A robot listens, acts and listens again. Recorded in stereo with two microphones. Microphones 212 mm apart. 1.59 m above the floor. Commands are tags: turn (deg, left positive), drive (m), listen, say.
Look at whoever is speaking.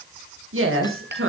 <turn deg="-90"/>
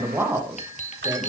<turn deg="-10"/>
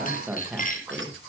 <say>Facing the woman speaking.</say>